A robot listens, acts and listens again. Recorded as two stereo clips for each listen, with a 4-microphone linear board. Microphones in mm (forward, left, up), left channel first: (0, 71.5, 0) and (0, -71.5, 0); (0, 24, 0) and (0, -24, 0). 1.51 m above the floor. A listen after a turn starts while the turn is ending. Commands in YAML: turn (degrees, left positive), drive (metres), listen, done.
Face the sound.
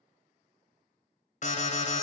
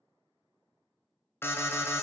turn: 60
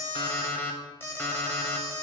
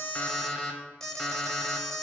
turn: 15
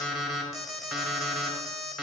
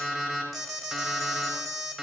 done: "Facing the alarm."